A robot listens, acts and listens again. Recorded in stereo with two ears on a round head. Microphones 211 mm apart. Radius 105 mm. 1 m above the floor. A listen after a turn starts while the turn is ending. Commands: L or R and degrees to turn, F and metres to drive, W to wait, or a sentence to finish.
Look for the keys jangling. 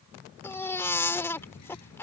L90
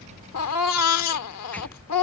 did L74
L15
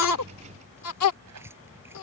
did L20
R10
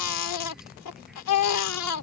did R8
Found it: keys jangling, straight ahead.